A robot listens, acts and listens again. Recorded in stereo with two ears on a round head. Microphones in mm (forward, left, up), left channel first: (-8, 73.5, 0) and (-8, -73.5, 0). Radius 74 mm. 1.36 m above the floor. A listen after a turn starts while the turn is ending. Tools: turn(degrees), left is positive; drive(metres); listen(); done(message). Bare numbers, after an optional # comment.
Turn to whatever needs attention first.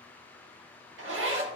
listen()
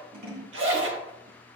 listen()
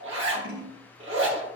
done("I can't make out anything urgent to turn to.")